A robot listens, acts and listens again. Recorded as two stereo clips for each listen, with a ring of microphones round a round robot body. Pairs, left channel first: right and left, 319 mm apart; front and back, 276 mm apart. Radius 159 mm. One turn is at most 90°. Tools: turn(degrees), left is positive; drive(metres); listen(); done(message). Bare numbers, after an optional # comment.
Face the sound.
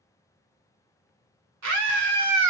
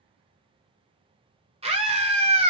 # The scream: 115° left.
turn(90)
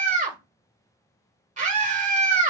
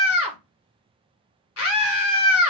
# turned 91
# The scream is now 25° left.
turn(25)
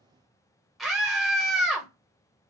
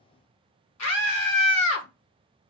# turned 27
done("Found it: a scream, straight ahead.")